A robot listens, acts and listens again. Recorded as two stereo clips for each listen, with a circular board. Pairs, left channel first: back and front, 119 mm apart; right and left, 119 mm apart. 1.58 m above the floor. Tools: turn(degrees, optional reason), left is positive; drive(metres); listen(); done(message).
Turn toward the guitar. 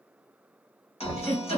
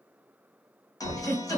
turn(degrees=-150, reason="The guitar: 150° right.")
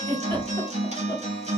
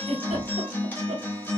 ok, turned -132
turn(degrees=-15, reason="The guitar is now 15° right.")
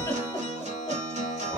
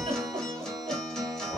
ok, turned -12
done("Facing the guitar, 1 to 2 m away.")